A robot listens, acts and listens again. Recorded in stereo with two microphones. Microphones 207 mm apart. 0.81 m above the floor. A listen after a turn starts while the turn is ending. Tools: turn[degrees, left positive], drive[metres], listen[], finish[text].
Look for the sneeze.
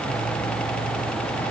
Action: listen[]
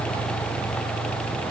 Action: listen[]
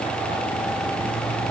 Action: finish[I can't make out a sneeze to turn to.]